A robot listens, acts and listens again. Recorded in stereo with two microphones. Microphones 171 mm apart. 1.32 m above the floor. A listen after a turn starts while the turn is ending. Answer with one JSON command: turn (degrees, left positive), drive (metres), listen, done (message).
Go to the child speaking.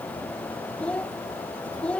{"turn": 30}
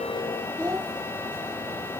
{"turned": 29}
{"turn": -20}
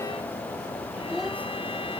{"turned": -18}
{"drive": 1.0}
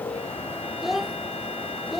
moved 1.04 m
{"drive": 1.0}
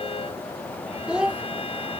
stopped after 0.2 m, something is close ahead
{"done": "I am next to the child speaking."}